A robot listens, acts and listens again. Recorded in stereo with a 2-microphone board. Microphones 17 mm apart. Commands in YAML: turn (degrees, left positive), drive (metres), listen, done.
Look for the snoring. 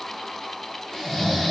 turn: 35
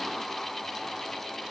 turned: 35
listen: true
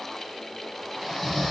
turn: 10
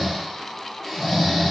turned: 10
done: "Facing the snoring."